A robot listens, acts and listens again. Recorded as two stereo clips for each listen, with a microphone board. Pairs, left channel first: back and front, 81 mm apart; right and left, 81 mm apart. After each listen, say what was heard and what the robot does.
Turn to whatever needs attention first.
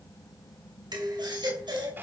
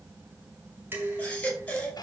The baby crying: 15° right. Turn 15° right.
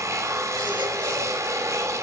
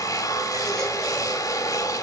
Keep listening.
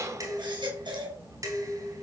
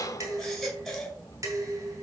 Facing the baby crying, over 4 m away.